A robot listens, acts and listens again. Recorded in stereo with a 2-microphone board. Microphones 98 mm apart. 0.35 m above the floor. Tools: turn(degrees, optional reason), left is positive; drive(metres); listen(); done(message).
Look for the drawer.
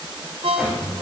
turn(degrees=30)
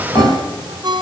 turn(degrees=150, reason="So it is at 150° left.")
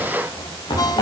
turn(degrees=60, reason="The drawer is now 60° left.")
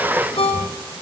listen()
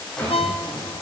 turn(degrees=10, reason="The drawer is now 10° left.")
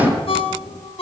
done("Facing the drawer.")